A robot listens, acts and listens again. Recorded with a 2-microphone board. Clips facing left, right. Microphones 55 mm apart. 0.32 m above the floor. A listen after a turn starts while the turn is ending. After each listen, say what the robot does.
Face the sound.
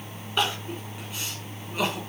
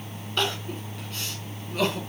Turn 30° left.
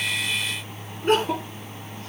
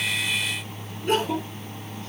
Turn 135° left.
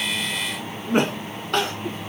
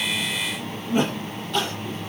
Turn 70° left.
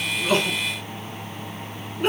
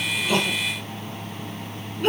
Turn 20° left.
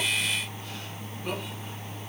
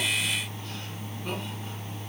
Keep listening.
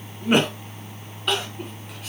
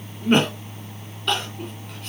Facing the crying.